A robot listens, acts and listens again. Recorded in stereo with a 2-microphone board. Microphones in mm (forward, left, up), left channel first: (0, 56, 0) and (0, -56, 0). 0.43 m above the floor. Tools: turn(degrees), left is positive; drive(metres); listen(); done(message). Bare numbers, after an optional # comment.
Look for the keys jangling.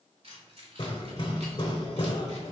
# The keys jangling: about 55° right or 125° right.
turn(-55)
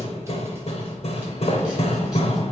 listen()
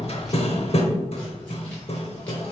listen()
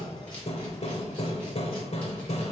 done("I heard keys jangling, but can't make it out now. It was about straight ahead or 70° right.")